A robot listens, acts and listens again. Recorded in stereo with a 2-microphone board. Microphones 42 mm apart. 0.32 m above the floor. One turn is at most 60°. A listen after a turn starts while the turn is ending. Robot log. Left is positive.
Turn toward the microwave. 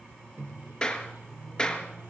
note: The microwave: about 75° right or 105° right.
cmd yaw -60
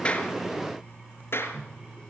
note: So it is at 45° right.
cmd yaw -45
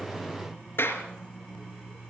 cmd idle
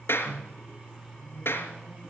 note: The microwave is now 20° right.
cmd yaw -20
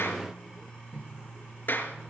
end: Facing the microwave, over 4 m away.